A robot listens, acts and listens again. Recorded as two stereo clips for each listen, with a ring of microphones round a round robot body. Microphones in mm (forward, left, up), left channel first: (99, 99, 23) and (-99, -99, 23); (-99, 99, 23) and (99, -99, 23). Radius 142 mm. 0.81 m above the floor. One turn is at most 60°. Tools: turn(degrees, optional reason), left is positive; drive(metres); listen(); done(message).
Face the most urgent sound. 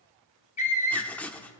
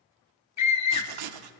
turn(degrees=60, reason="The scream: 110° left.")
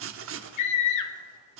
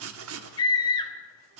turn(degrees=60, reason="The scream is now 60° left.")
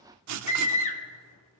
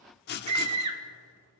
turn(degrees=-20, reason="The scream is now 20° right.")
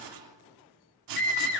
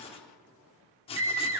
done("Found it: a scream, straight ahead, 1 to 2 m away.")